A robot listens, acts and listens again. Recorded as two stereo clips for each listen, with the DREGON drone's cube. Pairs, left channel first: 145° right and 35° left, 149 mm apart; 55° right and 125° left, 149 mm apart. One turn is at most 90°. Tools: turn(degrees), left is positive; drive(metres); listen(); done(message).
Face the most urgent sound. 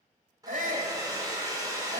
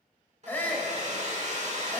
turn(degrees=20)
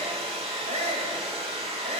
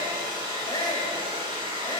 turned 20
done("Found it: a shout, straight ahead.")